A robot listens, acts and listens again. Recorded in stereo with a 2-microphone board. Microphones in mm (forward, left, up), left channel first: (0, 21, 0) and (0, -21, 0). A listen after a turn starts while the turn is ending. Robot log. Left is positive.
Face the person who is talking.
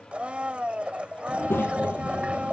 note: The child speaking: about 65° left or 115° left.
cmd yaw +65
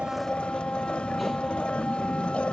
end: Found it: a child speaking, straight ahead.